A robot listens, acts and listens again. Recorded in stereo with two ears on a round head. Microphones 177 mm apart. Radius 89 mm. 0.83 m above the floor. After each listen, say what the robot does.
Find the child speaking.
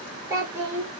Turn 15° right.
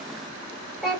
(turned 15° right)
Facing the child speaking, 2 to 4 m away.